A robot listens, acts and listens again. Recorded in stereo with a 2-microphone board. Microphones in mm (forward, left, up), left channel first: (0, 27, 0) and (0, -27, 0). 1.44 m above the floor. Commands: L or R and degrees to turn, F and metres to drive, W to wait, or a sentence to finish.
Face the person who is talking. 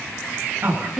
R35
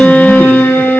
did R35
W
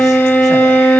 W
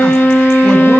I heard a woman speaking, but can't make it out now. It was about straight ahead or 110° right.